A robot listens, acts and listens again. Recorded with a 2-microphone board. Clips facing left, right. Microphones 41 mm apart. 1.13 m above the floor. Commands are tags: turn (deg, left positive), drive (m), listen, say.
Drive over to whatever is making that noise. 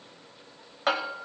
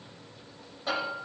<turn deg="90"/>
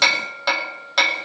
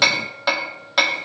<drive m="1.0"/>
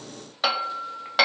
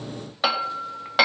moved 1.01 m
<turn deg="-10"/>
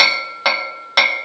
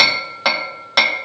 <drive m="1.0"/>
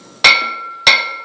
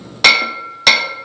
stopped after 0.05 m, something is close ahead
<say>Arrived at the hammering, straight ahead.</say>